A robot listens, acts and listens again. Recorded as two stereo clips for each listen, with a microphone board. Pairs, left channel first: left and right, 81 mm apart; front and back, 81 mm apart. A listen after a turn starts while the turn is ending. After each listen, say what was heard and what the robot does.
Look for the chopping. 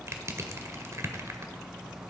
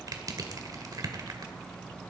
Keep listening.
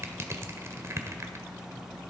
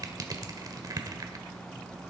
Keep listening.
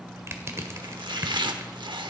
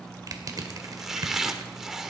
The chopping: 95° right. Turn 95° right.
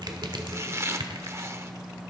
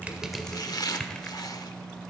The chopping is now 35° right. Turn 35° right.
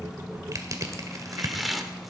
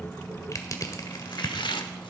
Found it: chopping, straight ahead, 1 to 2 m away.